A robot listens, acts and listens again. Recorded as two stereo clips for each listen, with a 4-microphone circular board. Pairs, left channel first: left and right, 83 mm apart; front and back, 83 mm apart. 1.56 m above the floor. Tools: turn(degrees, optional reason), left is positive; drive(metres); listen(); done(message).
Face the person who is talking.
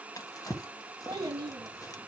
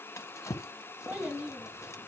turn(degrees=-110, reason="The child speaking: 110° right.")
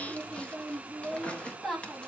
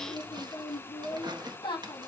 done("Found it: a child speaking, straight ahead, 1 to 2 m away.")